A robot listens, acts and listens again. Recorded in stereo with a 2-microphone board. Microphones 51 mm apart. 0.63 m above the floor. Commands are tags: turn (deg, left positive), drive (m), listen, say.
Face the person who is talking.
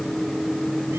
<listen/>
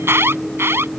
<listen/>
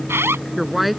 <turn deg="-30"/>
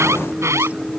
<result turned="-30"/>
<listen/>
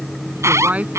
<turn deg="-145"/>
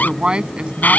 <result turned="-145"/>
<turn deg="-20"/>
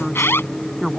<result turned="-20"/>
<say>Found it: a woman speaking, straight ahead.</say>